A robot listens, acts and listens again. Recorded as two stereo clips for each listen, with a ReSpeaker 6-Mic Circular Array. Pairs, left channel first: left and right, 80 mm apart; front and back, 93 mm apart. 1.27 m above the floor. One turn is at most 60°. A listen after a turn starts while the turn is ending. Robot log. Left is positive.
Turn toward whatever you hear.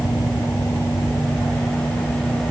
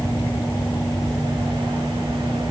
cmd idle
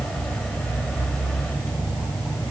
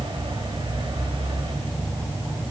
cmd idle
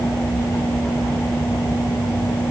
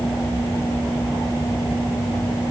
end: I can't make out anything.